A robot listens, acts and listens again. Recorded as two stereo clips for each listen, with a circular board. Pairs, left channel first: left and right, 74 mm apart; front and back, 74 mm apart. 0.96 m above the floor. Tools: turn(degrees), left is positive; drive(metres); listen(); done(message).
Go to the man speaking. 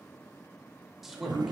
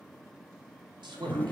turn(degrees=-175)
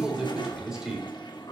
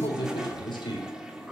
drive(metres=1.0)
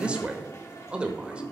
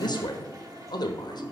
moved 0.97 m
turn(degrees=-15)
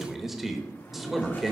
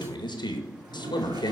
drive(metres=1.0)
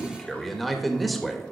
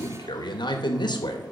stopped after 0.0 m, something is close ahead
done("I am next to the man speaking.")